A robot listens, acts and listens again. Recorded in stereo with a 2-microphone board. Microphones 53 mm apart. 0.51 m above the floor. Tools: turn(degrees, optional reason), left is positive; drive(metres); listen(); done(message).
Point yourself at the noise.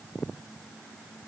listen()
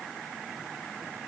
listen()
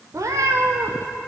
turn(degrees=-90)
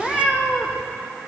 done("Facing the cat meowing.")